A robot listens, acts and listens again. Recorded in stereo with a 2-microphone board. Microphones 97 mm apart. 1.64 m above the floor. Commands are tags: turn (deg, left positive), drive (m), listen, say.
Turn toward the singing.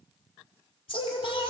<turn deg="65"/>
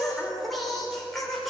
<say>Found it: singing, straight ahead, over 4 m away.</say>